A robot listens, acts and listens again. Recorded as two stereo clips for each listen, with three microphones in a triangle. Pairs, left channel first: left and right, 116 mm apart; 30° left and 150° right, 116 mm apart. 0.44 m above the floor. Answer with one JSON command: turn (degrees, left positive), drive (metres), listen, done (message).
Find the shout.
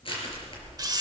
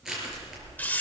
{"listen": true}
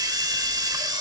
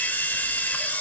{"listen": true}
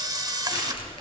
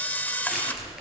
{"done": "I can't make out a shout to turn to."}